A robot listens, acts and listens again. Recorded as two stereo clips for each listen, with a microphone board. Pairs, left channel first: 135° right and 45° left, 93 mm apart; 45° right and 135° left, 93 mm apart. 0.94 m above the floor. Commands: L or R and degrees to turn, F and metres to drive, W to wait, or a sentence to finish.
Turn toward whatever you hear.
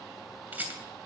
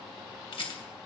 R25
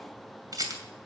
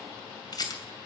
Facing the rattle, 2 to 4 m away.